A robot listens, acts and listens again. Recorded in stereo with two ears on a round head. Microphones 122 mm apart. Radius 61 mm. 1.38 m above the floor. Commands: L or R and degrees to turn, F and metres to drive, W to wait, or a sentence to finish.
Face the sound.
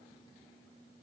W
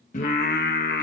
L70
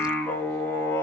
L20
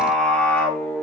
L15
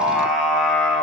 Found it: singing, straight ahead.